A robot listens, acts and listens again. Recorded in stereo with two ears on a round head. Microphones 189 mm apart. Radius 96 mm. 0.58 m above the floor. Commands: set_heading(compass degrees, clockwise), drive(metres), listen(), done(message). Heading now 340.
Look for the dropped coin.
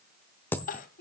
set_heading(310)
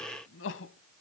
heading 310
listen()
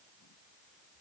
done("I heard a dropped coin, but can't make it out now. It was about 20° right or 140° left.")